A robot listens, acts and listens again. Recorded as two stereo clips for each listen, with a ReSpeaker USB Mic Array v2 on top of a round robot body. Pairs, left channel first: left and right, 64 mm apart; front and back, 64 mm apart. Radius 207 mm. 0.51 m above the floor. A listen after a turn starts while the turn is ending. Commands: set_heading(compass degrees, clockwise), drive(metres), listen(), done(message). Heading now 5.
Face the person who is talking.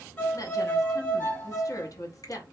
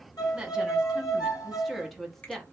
set_heading(280)
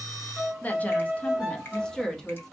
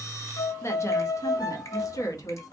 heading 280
done("Facing the woman speaking.")